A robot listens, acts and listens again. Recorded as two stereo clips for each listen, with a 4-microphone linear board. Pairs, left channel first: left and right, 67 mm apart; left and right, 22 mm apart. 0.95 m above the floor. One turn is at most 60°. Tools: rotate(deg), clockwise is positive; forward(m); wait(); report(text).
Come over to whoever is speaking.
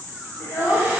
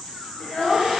rotate(-40)
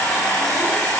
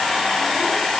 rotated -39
wait()
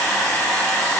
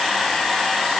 wait()
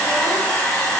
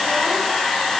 report("I heard a child speaking, but can't make it out now. It was about straight ahead or 105° left. I did not reach it.")